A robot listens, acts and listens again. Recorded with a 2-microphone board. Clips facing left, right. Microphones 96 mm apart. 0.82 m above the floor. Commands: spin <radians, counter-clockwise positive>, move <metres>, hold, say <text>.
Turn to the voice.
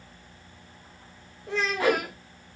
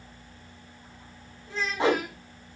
spin 1.57
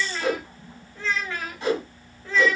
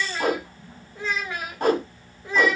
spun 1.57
spin -0.26
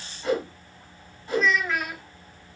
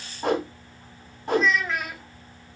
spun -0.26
say Facing the child speaking.